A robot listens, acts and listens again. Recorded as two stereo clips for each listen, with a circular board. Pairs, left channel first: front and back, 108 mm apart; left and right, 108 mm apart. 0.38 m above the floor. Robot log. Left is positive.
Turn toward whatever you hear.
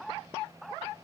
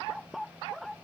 cmd idle
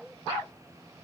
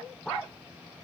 cmd idle
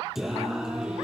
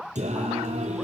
note: The singing: 95° right.
cmd yaw -95
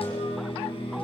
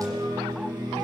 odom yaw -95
note: The singing is now 35° right.
cmd yaw -35
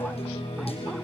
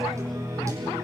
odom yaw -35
note: The singing is now 30° right.
cmd yaw -30
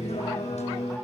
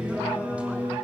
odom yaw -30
note: The singing is now 10° right.
cmd yaw -10
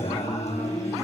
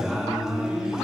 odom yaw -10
end: Found it: singing, straight ahead.